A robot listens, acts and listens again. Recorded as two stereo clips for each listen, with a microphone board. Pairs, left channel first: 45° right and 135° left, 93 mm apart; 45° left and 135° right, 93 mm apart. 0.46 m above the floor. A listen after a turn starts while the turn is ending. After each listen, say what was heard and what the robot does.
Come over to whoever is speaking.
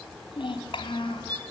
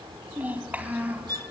The child speaking: 60° right. Turn 60° right.
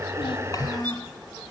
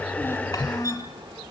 Drive 1.0 m forward.
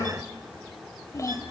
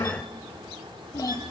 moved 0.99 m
Drive 1.0 m forward.
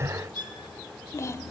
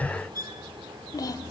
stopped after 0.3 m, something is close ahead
Arrived at the child speaking, straight ahead.